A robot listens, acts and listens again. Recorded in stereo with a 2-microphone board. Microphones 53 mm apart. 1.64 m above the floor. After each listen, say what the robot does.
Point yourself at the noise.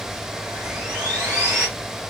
Turn 20° right.
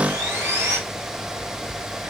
Turn 140° right.
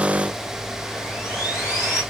Found it: sawing, straight ahead.